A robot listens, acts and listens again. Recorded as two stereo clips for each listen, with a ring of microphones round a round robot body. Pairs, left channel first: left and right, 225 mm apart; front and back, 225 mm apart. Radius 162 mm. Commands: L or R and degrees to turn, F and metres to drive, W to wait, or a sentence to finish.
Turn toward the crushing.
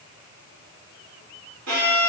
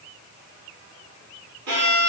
W
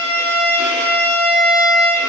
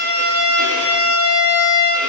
W
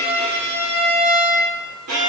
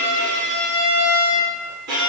I can't make out crushing to turn to.